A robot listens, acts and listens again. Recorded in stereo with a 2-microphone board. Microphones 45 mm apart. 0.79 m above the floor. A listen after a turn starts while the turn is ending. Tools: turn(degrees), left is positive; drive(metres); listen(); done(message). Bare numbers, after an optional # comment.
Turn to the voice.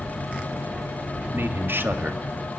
# The man speaking: about 55° right or 125° right.
turn(-55)
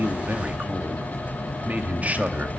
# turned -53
# So it is at 45° right.
turn(-45)
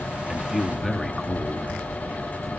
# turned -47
done("Found it: a man speaking, straight ahead, 1 to 2 m away.")